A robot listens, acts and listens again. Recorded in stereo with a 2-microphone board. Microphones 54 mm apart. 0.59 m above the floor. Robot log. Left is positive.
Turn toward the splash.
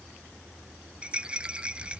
cmd idle
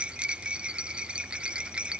cmd idle
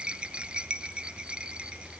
end: I can't make out a splash, only a rattle.